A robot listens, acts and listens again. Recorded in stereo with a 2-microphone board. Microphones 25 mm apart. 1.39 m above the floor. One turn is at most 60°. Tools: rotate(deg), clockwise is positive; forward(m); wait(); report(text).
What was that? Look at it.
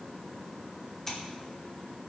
rotate(-20)
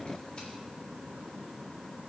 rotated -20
wait()
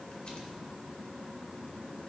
wait()
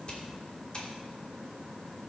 rotate(-60)
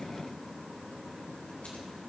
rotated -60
rotate(-60)
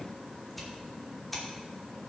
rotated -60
report("Facing the scissors, 2 to 4 m away.")